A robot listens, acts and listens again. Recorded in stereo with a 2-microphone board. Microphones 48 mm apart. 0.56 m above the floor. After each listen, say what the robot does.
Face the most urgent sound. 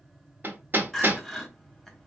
Turn 30° left.
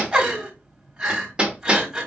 Turn 25° right.
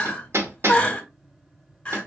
Turn 30° left.
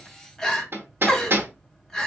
Turn 10° left.
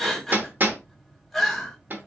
Found it: crying, straight ahead, 1 to 2 m away.